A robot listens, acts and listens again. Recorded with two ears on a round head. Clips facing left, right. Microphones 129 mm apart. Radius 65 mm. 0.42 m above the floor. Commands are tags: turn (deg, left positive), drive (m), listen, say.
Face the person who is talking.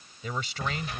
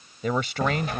<turn deg="-50"/>
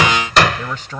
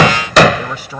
<turn deg="-10"/>
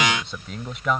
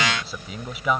<say>Found it: a man speaking, straight ahead.</say>